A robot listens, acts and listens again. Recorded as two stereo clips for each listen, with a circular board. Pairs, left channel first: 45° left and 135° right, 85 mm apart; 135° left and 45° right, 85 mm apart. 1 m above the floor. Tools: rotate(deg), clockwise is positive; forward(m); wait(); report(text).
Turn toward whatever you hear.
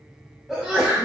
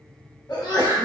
rotate(-145)
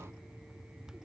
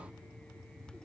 report("Facing where the sneeze came from. I can't hear it now.")